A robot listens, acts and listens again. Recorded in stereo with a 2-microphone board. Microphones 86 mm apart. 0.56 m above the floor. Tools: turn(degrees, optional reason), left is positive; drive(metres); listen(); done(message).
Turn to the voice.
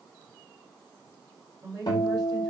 turn(degrees=-45, reason="The woman speaking: about 45° right or 135° right.")
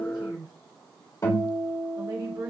turn(degrees=-85, reason="So it is at 85° right.")
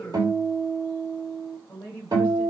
turn(degrees=20, reason="The woman speaking is now 20° left.")
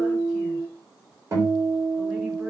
listen()
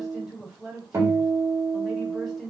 done("Facing the woman speaking, 2 to 4 m away.")